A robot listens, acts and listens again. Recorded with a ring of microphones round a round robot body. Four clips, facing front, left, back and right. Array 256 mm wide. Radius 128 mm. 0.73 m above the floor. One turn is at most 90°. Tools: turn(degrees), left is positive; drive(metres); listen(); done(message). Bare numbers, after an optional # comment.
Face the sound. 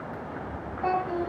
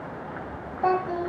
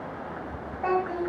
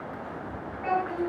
# The child speaking: 95° left.
turn(90)
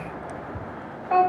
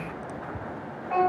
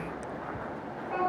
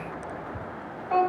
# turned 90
# The child speaking is now 10° right.
turn(-10)
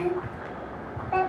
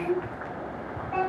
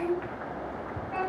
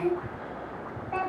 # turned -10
done("Found it: a child speaking, straight ahead, 2 to 4 m away.")